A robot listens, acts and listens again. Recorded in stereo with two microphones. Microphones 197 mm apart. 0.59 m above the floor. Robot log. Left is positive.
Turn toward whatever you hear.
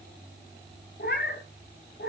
note: The cat meowing: about 70° left or 110° left.
cmd yaw +70
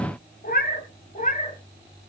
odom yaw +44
note: So it is at 40° left.
cmd yaw +40
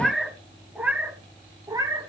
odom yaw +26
note: The cat meowing is now 20° right.
cmd yaw -20
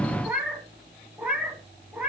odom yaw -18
end: Found it: a cat meowing, straight ahead, 2 to 4 m away.